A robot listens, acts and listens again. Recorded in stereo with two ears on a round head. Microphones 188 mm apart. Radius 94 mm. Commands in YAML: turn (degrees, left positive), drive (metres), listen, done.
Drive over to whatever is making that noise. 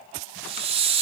turn: -30
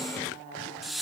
drive: 1.0
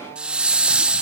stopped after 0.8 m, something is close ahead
done: "I am next to the hiss."